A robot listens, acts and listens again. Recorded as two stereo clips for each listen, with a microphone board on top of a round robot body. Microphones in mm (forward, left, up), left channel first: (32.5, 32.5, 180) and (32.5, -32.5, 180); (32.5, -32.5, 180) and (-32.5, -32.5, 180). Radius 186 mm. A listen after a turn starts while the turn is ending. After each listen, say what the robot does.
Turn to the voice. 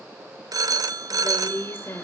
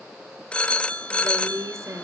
Turn 145° left.
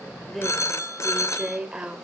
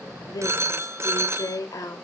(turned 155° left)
Turn 10° right.
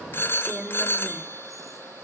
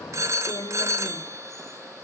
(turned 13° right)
Found it: a woman speaking, straight ahead, 2 to 4 m away.